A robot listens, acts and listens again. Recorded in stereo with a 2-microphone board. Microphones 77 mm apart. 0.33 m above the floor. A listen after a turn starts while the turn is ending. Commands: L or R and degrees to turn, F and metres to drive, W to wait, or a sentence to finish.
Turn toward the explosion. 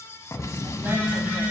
L40
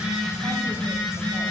W
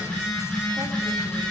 I heard an explosion, but can't make it out now. It was about straight ahead or 100° left.